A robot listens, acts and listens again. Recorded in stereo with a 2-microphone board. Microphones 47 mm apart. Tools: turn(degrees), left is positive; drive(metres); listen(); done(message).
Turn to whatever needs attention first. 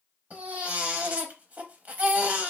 turn(degrees=-35)
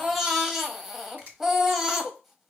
done("Facing the baby crying, under 1 m away.")